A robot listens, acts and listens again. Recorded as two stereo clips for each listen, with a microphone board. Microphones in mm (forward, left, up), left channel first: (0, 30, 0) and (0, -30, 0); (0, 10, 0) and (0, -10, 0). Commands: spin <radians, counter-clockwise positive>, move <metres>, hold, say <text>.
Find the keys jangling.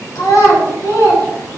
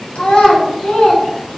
hold
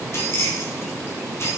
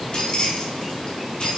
spin 0.79
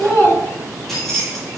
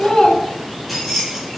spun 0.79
say Found it: keys jangling, straight ahead.